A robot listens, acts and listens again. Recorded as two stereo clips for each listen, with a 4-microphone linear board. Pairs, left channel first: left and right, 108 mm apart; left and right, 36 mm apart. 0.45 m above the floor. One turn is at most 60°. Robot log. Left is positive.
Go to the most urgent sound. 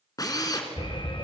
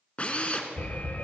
note: The alarm: about 55° left or 125° left.
cmd yaw +55
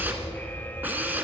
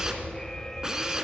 note: So it is at 20° left.
cmd yaw +20
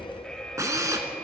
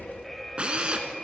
note: The alarm is now 10° left.
cmd yaw +10
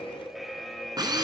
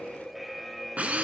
cmd fwd 1.0
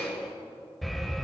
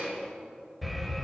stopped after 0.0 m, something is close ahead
end: Blocked. The alarm is further on, straight ahead.